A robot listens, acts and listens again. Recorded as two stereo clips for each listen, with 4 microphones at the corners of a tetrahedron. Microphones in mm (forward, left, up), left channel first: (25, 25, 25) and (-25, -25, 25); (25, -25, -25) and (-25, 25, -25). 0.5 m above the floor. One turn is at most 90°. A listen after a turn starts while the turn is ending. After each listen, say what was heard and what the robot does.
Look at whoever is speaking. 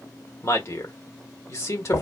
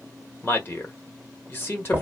The man speaking: 10° left. Turn 10° left.
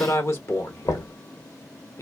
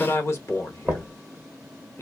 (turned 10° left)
Facing the man speaking.